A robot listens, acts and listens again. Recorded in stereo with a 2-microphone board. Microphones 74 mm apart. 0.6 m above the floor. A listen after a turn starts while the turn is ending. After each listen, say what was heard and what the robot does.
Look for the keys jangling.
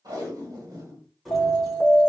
Turn 30° left.
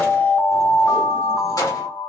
So it is at 125° left. Turn 125° left.
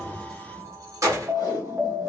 The keys jangling is now 45° right. Turn 45° right.
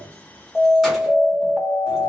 Keep listening.
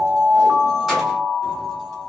Keep listening.
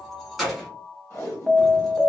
Found it: keys jangling, straight ahead.